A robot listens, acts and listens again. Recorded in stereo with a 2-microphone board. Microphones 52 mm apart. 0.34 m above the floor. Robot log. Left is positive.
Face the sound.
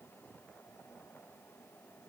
cmd idle
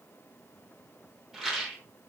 cmd yaw -30
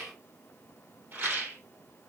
note: So it is at 140° right.
cmd yaw -140
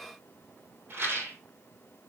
note: The rattle is now 45° right.
cmd yaw -45
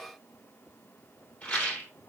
note: The rattle is now 30° left.
cmd yaw +30
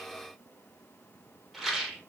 end: Facing the rattle, 2 to 4 m away.